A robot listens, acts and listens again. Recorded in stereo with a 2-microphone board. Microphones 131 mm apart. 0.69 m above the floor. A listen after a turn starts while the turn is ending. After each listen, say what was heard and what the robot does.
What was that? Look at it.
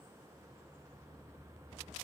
Keep listening.
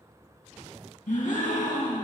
Turn 90° left.
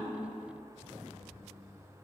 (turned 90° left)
I heard a gasp from this way, but can't make it out now.